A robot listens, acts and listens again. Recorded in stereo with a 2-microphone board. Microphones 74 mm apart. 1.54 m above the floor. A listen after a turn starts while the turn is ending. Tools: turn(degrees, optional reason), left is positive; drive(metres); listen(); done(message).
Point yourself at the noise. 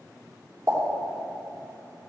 turn(degrees=-45, reason="The pop: about 45° right or 135° right.")
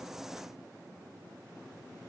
listen()
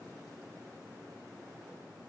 done("I heard a pop, but can't make it out now. It was about straight ahead or 90° right.")